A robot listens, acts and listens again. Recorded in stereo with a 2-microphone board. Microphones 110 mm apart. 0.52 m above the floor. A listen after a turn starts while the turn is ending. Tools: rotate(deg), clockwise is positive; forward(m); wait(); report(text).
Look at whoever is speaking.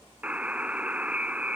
wait()
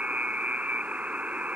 wait()
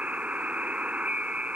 report("I can't make out anyone speaking to turn to.")